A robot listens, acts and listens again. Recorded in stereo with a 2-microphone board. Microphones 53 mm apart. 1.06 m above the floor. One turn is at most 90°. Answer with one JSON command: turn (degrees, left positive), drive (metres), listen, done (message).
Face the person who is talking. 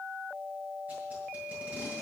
{"listen": true}
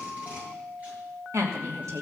{"turn": -65}
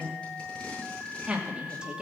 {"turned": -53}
{"turn": -15}
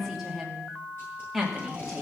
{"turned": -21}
{"done": "Found it: a woman speaking, straight ahead, 2 to 4 m away."}